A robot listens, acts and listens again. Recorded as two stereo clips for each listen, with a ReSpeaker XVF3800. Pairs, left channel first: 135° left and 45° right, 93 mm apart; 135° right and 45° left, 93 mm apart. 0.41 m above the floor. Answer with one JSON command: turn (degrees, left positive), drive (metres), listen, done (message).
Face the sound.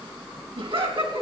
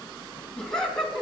{"turn": -50}
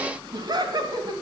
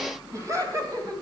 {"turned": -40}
{"done": "Facing the laughter, 2 to 4 m away."}